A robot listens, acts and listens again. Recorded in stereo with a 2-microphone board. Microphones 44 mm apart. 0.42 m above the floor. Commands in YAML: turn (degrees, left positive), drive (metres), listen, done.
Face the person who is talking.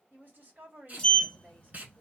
turn: -55
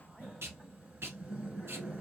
listen: true
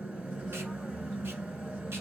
listen: true
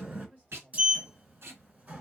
turn: -45
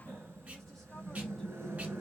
listen: true
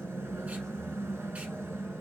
listen: true
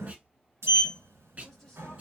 done: "Facing where the woman speaking came from. I can't hear it now."